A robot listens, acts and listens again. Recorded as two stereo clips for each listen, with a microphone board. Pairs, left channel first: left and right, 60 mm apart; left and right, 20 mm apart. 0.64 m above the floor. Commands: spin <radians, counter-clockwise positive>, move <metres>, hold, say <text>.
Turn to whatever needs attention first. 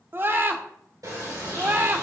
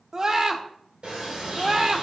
spin -0.70
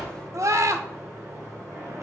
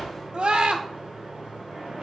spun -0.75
spin -1.66
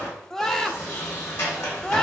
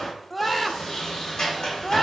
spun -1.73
say Facing the scream, 1 to 2 m away.